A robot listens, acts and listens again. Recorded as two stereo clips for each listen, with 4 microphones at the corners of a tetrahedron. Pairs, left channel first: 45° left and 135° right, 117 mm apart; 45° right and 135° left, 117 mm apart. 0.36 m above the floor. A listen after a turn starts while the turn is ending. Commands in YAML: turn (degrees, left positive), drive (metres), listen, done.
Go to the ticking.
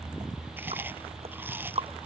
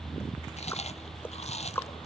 turn: -115
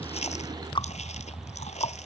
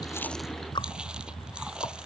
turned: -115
drive: 1.0
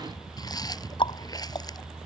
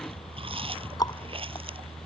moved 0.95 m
drive: 1.0
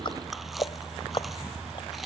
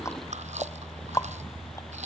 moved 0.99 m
turn: 10
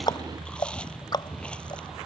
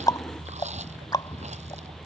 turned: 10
drive: 1.0
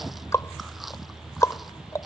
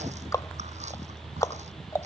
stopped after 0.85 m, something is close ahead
done: "Arrived at the ticking, straight ahead."